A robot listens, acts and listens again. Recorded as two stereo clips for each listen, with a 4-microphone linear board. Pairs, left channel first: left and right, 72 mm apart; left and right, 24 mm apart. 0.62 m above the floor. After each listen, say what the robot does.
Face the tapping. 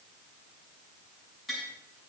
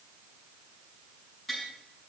Turn 30° left.
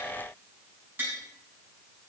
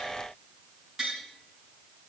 Turn 30° right.
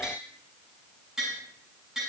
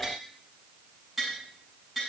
Turn 10° right.
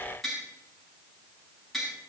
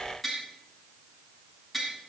Facing the tapping, over 4 m away.